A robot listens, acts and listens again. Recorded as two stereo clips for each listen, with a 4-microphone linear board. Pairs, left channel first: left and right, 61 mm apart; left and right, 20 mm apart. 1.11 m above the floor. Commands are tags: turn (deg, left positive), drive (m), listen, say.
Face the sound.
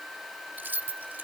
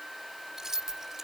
<turn deg="-30"/>
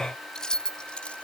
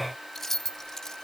<turn deg="20"/>
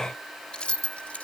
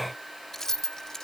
<turn deg="25"/>
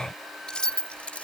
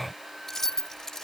<turn deg="20"/>
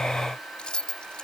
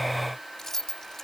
<turn deg="15"/>
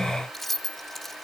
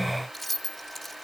<say>Facing the keys jangling.</say>